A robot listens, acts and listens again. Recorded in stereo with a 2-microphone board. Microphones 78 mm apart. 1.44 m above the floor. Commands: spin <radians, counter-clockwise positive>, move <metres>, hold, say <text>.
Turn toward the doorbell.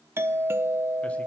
spin -0.52
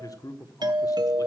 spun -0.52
spin -2.01
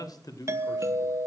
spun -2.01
spin -0.70
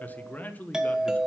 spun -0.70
spin -0.17
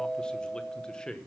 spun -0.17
say Found it: a doorbell, straight ahead.